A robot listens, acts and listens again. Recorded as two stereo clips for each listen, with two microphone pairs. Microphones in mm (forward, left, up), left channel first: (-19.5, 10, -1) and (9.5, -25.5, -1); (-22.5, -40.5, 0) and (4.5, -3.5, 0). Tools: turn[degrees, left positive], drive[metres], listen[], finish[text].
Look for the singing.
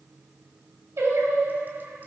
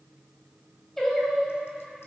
Thought: The singing: 45° right.
Action: turn[-45]
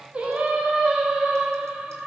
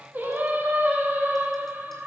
Thought: The singing is now 10° left.
Action: turn[10]
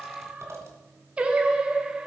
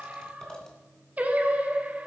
Thought: The singing is now 10° left.
Action: turn[10]
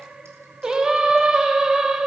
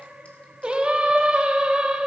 Action: finish[Found it: singing, straight ahead, 1 to 2 m away.]